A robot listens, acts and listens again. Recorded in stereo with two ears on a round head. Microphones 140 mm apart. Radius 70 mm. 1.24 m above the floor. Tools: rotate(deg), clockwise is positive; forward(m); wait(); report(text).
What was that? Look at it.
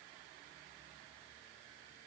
wait()
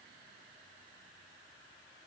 wait()
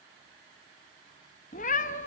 rotate(-50)
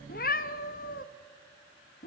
rotate(-70)
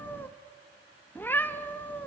rotate(-15)
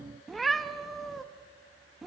report("Facing the cat meowing, under 1 m away.")